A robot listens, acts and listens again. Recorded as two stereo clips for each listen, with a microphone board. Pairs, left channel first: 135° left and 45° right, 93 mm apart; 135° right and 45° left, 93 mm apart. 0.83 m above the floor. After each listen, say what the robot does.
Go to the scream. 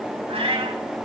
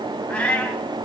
Keep listening.
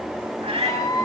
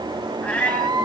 Turn 85° left.
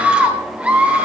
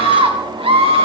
Turn 30° left.
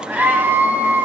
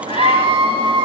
Turn 25° left.
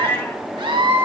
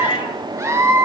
Turn 15° right.
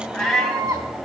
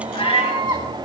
Drive 1.0 m forward.
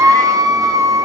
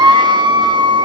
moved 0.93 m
Turn 10° left.
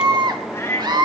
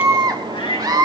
Drive 1.0 m forward.
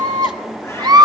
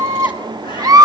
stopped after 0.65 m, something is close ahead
I am next to the scream.